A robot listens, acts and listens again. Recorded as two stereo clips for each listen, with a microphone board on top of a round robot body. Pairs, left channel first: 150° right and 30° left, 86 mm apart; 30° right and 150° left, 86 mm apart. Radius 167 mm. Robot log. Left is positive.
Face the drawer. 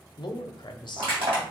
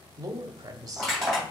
cmd idle
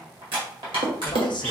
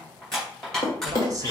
note: The drawer: 20° left.
cmd yaw +20
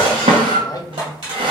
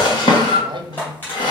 end: Found it: a drawer, straight ahead.